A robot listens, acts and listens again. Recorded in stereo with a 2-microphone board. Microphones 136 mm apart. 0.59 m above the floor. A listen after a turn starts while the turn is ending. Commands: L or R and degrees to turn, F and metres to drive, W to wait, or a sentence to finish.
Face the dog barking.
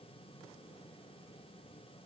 W
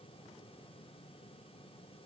W
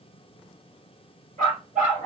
R90
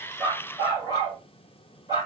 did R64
R30
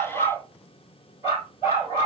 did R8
R20
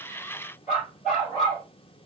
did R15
Facing the dog barking, 2 to 4 m away.